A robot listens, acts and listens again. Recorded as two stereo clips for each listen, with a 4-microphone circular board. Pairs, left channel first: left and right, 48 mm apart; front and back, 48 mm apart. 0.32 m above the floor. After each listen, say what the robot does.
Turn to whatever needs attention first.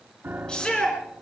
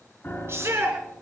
Turn 160° left.
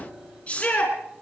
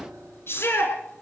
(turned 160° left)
Turn 25° left.
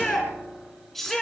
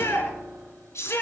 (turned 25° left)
Facing the shout.